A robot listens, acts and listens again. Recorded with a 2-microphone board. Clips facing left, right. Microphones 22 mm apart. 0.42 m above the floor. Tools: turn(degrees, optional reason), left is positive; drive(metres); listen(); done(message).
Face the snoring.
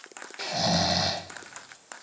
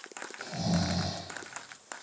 turn(degrees=55, reason="The snoring: about 55° left or 125° left.")
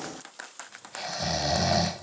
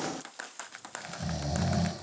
turn(degrees=65, reason="So it is at 65° left.")
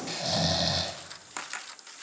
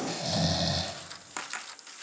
turn(degrees=15, reason="The snoring is now 15° left.")
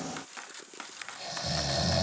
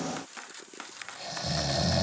done("Found it: snoring, straight ahead.")